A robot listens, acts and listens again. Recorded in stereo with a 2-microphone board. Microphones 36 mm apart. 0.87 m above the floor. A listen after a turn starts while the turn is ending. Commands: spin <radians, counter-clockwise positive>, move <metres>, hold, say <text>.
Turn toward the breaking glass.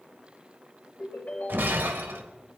spin -1.57
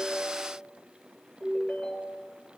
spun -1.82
spin 0.26
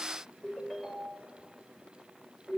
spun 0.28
say Facing where the breaking glass came from. I can't hear it now.